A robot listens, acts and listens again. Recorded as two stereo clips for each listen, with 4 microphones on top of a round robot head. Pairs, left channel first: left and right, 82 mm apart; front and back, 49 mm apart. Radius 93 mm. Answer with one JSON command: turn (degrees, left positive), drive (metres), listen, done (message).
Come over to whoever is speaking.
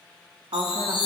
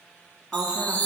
{"turn": -95}
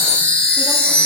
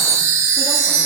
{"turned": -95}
{"listen": true}
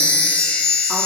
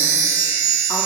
{"listen": true}
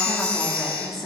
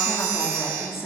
{"drive": 1.0}
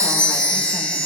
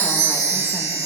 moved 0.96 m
{"listen": true}
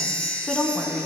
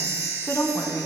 {"turn": 10}
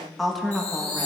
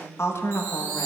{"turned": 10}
{"drive": 1.0}
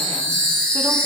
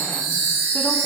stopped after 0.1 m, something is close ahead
{"listen": true}
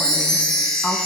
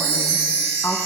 {"turn": 10}
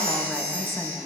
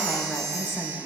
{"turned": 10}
{"done": "I am next to the woman speaking."}